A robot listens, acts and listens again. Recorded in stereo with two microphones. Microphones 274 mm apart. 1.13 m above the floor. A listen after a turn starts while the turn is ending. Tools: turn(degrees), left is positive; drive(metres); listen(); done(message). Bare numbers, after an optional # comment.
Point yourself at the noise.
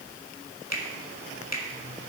# The finger snap: about 70° left or 110° left.
turn(70)
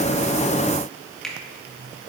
done("Found it: a finger snap, straight ahead, 1 to 2 m away.")